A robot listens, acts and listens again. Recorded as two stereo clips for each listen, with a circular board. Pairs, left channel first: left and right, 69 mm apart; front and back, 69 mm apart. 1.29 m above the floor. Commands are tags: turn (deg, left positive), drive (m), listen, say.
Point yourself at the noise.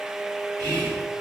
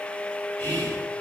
<turn deg="-65"/>
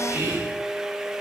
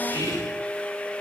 <turn deg="-30"/>
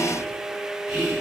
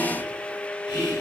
<say>Facing the whispering.</say>